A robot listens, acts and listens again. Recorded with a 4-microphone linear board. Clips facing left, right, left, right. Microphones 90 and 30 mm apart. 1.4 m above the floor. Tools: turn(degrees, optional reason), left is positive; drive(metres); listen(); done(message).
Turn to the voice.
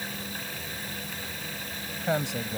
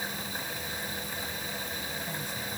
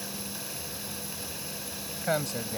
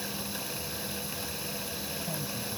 turn(degrees=70, reason="The man speaking: about 70° left or 110° left.")
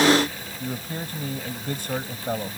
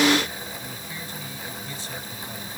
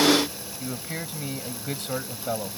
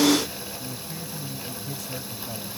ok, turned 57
turn(degrees=50, reason="So it is at 50° left.")
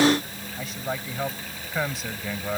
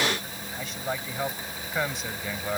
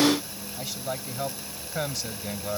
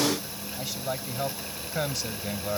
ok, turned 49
done("Facing the man speaking.")